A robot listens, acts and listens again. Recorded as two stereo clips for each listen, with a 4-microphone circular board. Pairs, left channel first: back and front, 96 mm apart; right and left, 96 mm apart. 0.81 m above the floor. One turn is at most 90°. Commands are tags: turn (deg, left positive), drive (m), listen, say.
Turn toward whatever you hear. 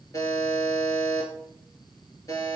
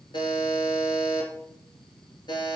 <turn deg="-90"/>
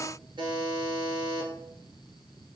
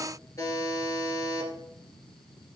<turn deg="-35"/>
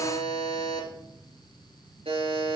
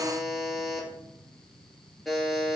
<say>Found it: a buzzer, straight ahead.</say>